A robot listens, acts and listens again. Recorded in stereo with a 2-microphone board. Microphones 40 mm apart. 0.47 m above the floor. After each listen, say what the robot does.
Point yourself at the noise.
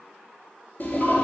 Turn 45° left.
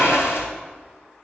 Turn 90° left.
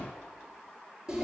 Turn 20° right.
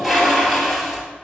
Found it: a toilet flushing, straight ahead, 1 to 2 m away.